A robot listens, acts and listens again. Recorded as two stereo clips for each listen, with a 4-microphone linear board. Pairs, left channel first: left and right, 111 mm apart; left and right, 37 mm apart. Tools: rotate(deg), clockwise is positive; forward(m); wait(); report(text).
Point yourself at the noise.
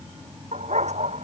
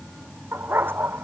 rotate(90)
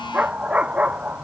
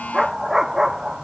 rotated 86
rotate(10)
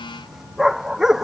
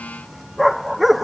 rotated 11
report("Facing the dog barking.")